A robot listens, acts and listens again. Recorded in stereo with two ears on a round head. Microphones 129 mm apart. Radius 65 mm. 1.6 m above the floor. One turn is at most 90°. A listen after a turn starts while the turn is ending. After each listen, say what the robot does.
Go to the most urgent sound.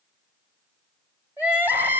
Turn 30° right.
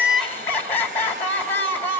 Turn 15° left.
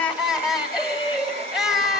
Drive 1.0 m forward.
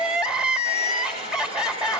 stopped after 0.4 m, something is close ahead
Blocked. The crying is further on, straight ahead.